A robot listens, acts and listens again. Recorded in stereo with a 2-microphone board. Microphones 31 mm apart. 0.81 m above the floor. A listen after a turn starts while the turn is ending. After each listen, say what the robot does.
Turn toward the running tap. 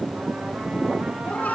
Keep listening.
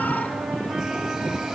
Keep listening.
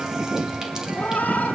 I can't make out a running tap to turn to.